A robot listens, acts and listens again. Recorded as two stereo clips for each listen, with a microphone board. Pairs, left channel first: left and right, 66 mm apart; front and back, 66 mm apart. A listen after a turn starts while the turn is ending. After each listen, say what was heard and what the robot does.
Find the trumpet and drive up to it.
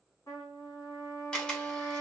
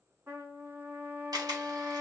The trumpet: 130° left. Turn 130° left.
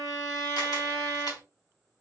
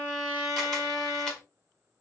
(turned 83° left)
The trumpet is now 45° left. Turn 45° left.
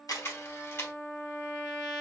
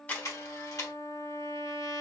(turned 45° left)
Drive 1.0 m forward.
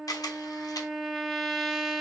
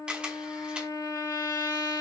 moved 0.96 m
Drive 1.0 m forward.
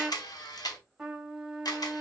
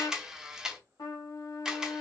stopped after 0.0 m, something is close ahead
I am next to the trumpet.